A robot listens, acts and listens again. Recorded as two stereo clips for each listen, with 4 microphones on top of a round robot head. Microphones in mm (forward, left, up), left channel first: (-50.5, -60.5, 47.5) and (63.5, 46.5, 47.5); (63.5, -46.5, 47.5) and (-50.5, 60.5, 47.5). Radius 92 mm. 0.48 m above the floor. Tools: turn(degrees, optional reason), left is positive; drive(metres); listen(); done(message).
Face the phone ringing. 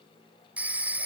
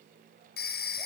turn(degrees=-40, reason="The phone ringing: 40° right.")
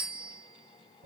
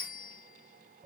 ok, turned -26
turn(degrees=-15, reason="The phone ringing is now 15° right.")
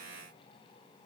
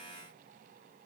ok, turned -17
listen()
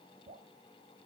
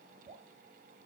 listen()
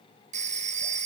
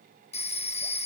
done("Facing the phone ringing.")